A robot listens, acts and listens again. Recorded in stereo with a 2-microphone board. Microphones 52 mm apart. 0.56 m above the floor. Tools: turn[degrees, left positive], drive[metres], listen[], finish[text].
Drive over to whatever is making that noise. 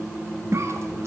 Thought: The cough: about 65° right or 115° right.
Action: turn[-65]
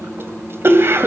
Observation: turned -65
Thought: So it is at 50° right.
Action: turn[-50]
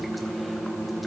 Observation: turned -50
Action: listen[]
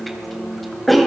Action: drive[1.0]
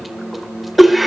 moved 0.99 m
Action: drive[1.0]
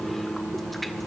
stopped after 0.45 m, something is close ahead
Action: listen[]
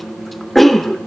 Action: finish[I am next to the cough.]